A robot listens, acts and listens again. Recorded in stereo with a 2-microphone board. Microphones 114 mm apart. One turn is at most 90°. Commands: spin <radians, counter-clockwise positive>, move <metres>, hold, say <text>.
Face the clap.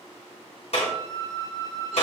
spin 1.22
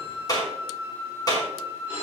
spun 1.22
spin 0.61
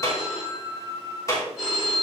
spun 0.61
spin 0.52
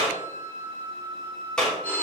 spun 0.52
spin 0.17
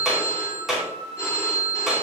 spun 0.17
say Facing the clap, 2 to 4 m away.